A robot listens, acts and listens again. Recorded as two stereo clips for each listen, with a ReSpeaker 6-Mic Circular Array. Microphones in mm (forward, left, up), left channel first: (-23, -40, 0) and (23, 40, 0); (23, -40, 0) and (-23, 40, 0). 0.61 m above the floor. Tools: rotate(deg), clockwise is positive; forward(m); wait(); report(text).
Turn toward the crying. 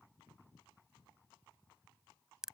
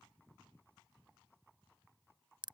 wait()
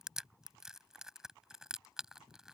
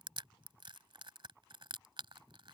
wait()
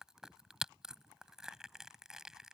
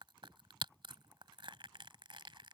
report("I can't make out crying to turn to.")